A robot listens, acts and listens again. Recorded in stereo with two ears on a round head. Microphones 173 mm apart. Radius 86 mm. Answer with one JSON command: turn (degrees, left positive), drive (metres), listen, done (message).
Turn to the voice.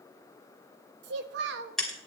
{"turn": -60}
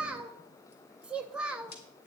{"done": "Found it: a child speaking, straight ahead."}